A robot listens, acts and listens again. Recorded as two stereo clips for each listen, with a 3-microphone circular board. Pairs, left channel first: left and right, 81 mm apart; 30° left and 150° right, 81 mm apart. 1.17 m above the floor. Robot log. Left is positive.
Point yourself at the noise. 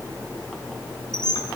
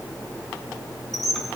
note: The squeak: 120° left.
cmd yaw +120
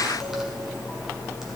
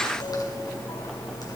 cmd idle
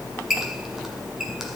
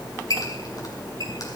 end: Found it: a squeak, straight ahead.